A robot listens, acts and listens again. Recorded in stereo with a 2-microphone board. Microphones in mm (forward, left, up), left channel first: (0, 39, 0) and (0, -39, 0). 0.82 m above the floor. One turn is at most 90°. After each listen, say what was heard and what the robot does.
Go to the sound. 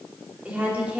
The woman speaking: about 15° right or 165° right. Turn 15° right.
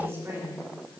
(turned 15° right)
So it is at 150° right. Turn 90° right.
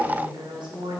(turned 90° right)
The woman speaking is now 85° right. Turn 85° right.
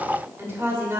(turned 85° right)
The woman speaking is now 30° right. Turn 30° right.
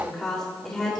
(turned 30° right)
Drive 1.0 m forward.
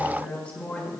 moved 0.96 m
The woman speaking is now 15° left. Turn 15° left.
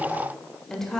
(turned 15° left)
Drive 1.0 m forward.
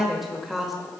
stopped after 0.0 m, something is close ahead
I am next to the woman speaking.